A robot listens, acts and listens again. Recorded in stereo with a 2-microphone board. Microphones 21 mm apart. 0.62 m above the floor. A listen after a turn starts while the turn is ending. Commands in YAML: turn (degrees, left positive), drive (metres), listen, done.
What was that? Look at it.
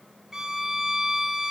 turn: -25
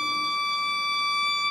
done: "Facing the violin, 2 to 4 m away."